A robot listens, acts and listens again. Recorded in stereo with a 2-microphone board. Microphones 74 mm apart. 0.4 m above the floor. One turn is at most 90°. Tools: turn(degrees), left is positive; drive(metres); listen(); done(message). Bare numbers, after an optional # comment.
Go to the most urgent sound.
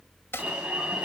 turn(-30)
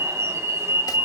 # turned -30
# So it is at 135° right.
turn(-90)
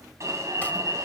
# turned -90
# The alarm is now 45° right.
turn(-45)
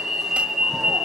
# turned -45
drive(1.0)
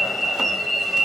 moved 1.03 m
drive(1.0)
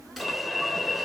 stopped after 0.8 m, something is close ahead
done("I am next to the alarm.")